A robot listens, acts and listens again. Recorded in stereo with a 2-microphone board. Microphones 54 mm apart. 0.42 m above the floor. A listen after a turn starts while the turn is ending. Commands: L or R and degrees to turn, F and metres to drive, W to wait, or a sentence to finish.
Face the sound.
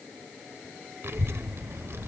R60
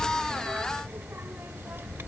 R55
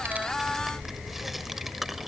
Facing the child speaking.